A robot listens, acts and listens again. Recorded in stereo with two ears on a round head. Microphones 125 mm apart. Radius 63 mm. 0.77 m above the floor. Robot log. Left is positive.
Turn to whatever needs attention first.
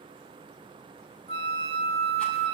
cmd idle
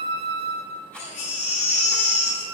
note: The baby crying: about 50° left or 130° left.
cmd yaw +50
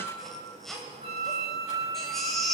end: Found it: a baby crying, straight ahead, 2 to 4 m away.